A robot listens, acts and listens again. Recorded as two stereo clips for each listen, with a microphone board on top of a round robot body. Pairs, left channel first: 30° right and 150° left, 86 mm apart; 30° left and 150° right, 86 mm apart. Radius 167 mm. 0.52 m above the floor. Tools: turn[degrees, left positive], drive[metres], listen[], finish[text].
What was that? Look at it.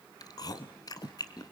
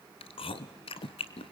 Thought: The chewing: 15° left.
Action: turn[15]
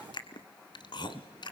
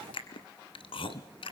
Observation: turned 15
Action: finish[Facing the chewing, 1 to 2 m away.]